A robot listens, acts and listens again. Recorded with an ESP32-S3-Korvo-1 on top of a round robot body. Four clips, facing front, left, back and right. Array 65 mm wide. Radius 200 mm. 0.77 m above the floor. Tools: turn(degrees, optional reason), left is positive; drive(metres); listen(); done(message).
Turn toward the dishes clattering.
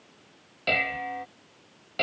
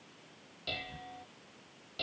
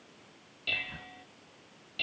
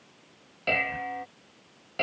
turn(degrees=-40, reason="The dishes clattering: 40° right.")
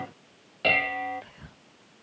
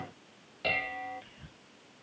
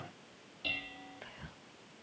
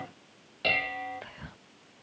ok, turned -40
done("Found it: dishes clattering, straight ahead.")